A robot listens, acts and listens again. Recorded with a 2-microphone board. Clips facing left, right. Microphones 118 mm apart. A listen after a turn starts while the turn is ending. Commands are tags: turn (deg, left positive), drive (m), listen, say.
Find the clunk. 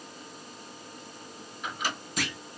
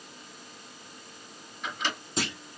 <turn deg="-30"/>
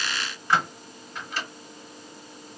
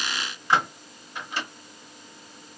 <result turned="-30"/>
<listen/>
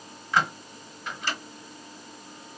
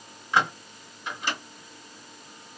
<say>I heard a clunk, but can't make it out now. It was about straight ahead or 120° right.</say>